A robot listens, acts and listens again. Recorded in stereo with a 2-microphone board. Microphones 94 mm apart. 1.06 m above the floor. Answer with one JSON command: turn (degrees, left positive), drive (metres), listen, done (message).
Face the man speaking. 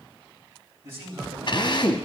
{"turn": -25}
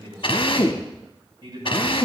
{"turn": -140}
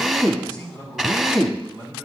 {"turn": -50}
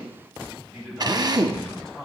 {"done": "Facing the man speaking, over 4 m away."}